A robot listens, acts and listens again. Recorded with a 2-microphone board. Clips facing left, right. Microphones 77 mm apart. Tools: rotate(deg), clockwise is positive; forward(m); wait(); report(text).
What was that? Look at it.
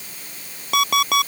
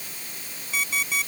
rotate(-75)
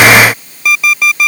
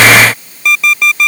report("Facing the alarm clock.")